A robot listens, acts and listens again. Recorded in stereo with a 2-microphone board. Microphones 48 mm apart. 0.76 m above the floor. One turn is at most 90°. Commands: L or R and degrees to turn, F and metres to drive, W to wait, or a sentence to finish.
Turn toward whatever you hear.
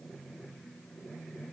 W
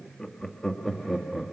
R30
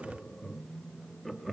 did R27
L30
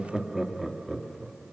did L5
R15
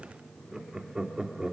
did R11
R30
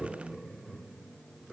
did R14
L30
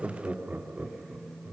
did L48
R40
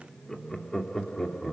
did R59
L10
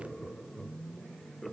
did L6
Found it: laughter, straight ahead, 2 to 4 m away.